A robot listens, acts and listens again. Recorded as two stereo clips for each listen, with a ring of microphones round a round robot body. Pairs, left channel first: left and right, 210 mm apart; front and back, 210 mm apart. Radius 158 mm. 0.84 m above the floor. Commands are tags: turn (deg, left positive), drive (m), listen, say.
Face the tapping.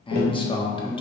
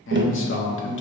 <turn deg="145"/>
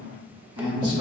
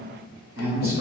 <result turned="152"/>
<turn deg="-10"/>
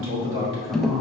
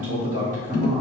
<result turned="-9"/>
<say>Found it: tapping, straight ahead, under 1 m away.</say>